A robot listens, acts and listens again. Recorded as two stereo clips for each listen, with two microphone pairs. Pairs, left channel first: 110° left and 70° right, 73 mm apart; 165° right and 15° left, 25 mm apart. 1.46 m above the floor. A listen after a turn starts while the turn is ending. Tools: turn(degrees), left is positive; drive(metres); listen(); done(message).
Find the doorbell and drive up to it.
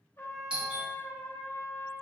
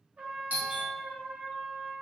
drive(metres=1.0)
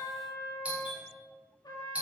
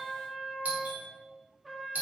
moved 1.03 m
drive(metres=1.0)
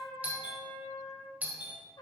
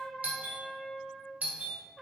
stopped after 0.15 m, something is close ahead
done("I am next to the doorbell.")